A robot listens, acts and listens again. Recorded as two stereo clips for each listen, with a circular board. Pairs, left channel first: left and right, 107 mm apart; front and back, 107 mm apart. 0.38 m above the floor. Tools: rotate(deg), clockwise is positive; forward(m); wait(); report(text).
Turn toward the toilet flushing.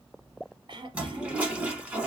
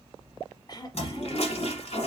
rotate(10)
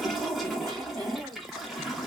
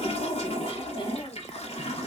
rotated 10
report("Facing the toilet flushing.")